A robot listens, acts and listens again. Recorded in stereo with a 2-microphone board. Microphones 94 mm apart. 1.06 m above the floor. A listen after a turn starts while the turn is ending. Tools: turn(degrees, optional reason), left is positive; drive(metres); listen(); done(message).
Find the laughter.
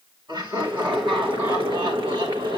turn(degrees=-55, reason="The laughter: about 55° right or 125° right.")
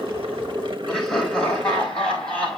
turn(degrees=10, reason="So it is at 10° left.")
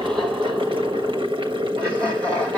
turn(degrees=15, reason="The laughter is now 15° left.")
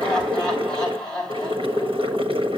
turn(degrees=10, reason="The laughter is now 10° left.")
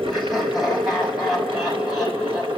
done("Found it: laughter, straight ahead, over 4 m away.")